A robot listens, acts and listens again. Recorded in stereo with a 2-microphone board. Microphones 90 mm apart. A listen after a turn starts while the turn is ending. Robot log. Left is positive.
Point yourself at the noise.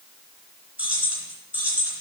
note: The keys jangling: about 25° right or 155° right.
cmd yaw -25
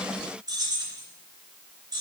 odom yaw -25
note: So it is at 130° right.
cmd yaw -130
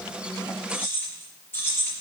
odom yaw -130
note: The keys jangling is now 25° left.
cmd yaw +25
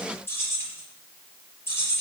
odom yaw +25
note: The keys jangling is now 30° left.
cmd yaw +30
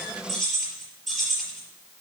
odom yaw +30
end: Found it: keys jangling, straight ahead, over 4 m away.